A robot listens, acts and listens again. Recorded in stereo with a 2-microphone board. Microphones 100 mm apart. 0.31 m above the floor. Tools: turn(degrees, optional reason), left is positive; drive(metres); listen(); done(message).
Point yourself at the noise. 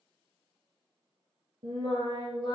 turn(degrees=-50, reason="The singing: about 50° right or 130° right.")
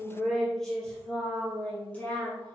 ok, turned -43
turn(degrees=15, reason="So it is at 15° left.")
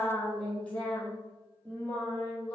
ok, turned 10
turn(degrees=15, reason="The singing is now 15° left.")
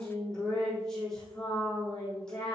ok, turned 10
done("Facing the singing.")